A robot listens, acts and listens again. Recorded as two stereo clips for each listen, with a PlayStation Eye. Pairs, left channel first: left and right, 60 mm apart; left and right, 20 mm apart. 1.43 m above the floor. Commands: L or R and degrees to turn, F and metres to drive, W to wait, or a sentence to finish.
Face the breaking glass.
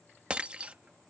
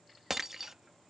R20
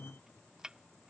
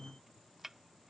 W
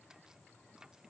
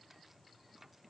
I heard breaking glass, but can't make it out now. It was about straight ahead or 140° right.